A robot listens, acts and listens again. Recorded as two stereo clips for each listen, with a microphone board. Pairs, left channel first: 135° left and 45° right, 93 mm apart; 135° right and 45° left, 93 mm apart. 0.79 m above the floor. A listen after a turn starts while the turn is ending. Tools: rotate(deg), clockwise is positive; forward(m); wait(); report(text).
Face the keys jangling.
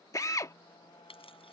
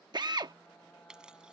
rotate(-125)
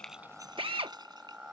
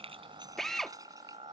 wait()
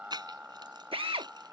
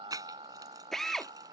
report("Facing the keys jangling.")